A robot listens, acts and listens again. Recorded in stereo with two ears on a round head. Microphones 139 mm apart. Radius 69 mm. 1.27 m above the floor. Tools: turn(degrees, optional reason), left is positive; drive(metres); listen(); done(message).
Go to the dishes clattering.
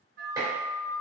turn(degrees=-25, reason="The dishes clattering: about 25° right or 155° right.")
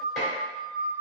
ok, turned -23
listen()
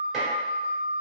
listen()
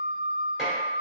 done("I heard dishes clattering, but can't make it out now. It was about straight ahead or 135° right. I did not reach it.")